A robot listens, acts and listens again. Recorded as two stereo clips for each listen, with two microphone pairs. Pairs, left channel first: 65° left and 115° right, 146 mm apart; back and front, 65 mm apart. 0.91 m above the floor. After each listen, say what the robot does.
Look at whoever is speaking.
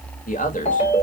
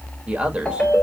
Turn 70° left.
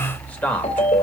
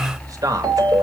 Turn 15° right.
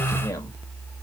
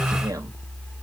Keep listening.
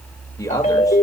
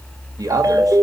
Facing the man speaking, 1 to 2 m away.